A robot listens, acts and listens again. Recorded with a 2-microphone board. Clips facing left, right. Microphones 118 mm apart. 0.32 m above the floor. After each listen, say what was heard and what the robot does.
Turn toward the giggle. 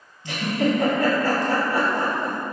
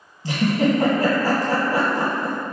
The giggle: about 35° right or 145° right. Turn 35° right.
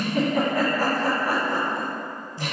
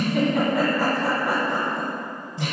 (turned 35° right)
Facing the giggle.